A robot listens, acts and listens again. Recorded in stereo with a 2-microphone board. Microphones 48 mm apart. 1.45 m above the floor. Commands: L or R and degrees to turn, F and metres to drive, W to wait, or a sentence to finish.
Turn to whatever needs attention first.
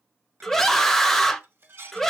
L30
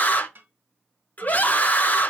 L140
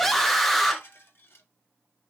Facing the scream.